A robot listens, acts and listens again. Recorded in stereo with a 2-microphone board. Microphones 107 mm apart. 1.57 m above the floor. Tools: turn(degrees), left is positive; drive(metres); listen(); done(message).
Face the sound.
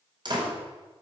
turn(degrees=-45)
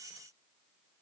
listen()
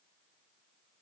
done("I heard a door slam, but can't make it out now. It was about straight ahead or 90° right.")